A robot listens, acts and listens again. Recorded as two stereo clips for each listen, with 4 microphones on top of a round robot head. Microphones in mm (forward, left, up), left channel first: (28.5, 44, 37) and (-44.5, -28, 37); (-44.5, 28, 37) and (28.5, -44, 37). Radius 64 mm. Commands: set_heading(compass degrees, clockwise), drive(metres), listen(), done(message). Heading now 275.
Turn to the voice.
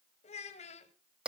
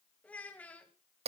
set_heading(220)
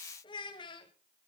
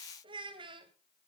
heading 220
done("Found it: a child speaking, straight ahead.")